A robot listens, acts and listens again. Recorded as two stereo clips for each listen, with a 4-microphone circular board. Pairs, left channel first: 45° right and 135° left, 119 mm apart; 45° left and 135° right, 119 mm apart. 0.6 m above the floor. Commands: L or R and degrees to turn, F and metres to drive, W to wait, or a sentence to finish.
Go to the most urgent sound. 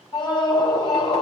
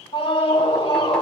F1.0
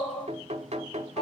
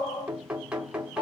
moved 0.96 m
F1.0
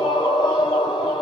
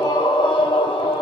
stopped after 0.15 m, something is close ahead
Blocked. The scream is further on, straight ahead.